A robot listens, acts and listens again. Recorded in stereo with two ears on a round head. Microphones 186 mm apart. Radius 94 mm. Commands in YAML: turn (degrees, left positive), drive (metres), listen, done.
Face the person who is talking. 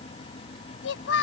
turn: 65
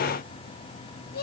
turn: 50
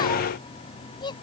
turn: 20
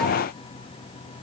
listen: true
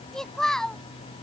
done: "Facing the child speaking."